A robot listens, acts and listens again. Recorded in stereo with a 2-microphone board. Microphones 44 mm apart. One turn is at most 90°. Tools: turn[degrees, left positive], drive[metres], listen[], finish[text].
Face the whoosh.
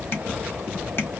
Action: listen[]
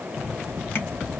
Action: listen[]
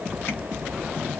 Action: finish[I can't make out a whoosh to turn to.]